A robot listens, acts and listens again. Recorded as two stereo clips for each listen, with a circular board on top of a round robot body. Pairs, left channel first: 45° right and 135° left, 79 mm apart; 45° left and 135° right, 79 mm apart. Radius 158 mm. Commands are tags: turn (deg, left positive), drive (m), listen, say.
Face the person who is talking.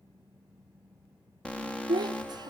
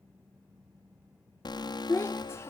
<turn deg="105"/>
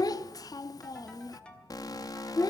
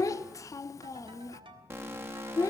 <say>Facing the child speaking.</say>